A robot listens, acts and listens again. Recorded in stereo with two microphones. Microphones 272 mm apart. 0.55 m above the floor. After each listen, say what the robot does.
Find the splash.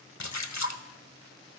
Turn 90° left.
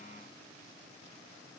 Facing where the splash came from. I can't hear it now.